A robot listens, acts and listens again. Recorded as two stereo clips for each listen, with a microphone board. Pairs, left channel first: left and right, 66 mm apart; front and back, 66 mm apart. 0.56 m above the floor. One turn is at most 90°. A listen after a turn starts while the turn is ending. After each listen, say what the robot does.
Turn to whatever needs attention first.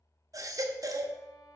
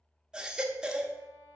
Turn 90° right.
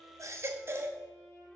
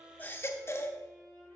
Turn 40° right.
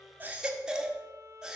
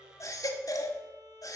Turn 10° right.
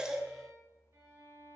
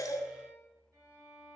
Facing the baby crying.